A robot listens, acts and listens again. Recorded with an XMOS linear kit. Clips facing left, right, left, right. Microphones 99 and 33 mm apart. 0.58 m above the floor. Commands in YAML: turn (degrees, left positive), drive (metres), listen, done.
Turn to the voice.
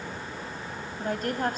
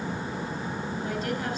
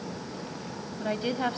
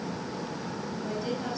turn: 50
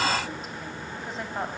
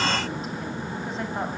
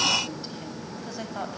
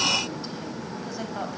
done: "Found it: a woman speaking, straight ahead, 2 to 4 m away."